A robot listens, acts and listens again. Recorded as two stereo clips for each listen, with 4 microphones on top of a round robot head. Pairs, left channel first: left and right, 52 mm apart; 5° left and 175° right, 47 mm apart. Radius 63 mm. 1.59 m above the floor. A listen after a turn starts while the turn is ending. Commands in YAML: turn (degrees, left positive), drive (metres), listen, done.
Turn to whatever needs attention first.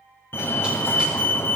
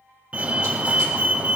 turn: 125
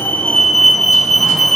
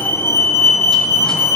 done: "Facing the fire alarm, 1 to 2 m away."